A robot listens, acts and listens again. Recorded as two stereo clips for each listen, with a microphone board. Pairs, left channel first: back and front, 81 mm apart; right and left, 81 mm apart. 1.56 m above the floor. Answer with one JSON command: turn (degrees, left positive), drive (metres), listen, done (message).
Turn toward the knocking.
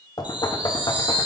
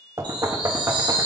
{"turn": 140}
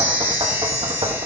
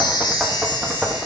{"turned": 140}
{"done": "Found it: knocking, straight ahead, under 1 m away."}